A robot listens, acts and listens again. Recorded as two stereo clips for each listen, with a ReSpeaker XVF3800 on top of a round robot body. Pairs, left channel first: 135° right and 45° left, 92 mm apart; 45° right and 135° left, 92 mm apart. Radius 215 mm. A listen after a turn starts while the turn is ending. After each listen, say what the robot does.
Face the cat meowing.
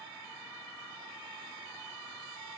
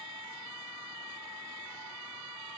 Keep listening.
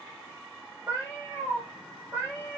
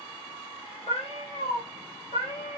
Turn 30° right.
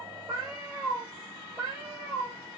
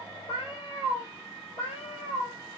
Turn 10° right.
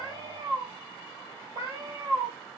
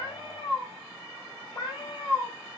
Found it: a cat meowing, straight ahead, 2 to 4 m away.